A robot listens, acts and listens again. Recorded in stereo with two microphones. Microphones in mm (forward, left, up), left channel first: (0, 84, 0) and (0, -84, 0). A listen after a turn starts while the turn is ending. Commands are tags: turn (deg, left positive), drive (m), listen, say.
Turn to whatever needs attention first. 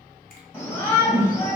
<turn deg="30"/>
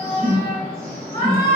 <turn deg="135"/>
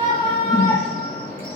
<turn deg="25"/>
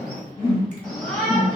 <turn deg="10"/>
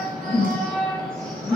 <say>Found it: a shout, straight ahead.</say>